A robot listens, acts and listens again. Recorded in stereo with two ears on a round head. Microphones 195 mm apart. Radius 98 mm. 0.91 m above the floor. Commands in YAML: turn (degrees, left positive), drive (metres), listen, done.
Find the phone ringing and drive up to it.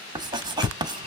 turn: 30
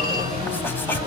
turn: -20
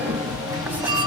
drive: 1.0
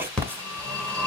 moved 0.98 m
drive: 1.0
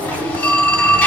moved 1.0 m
turn: 10
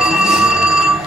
drive: 1.0
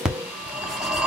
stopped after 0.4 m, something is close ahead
done: "Arrived at the phone ringing, straight ahead."